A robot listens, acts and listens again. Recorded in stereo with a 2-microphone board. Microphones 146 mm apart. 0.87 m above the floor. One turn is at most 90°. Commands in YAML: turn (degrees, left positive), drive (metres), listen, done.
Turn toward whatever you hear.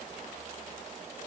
listen: true
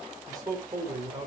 turn: -25
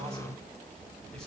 listen: true
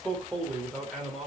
done: "Facing the man speaking."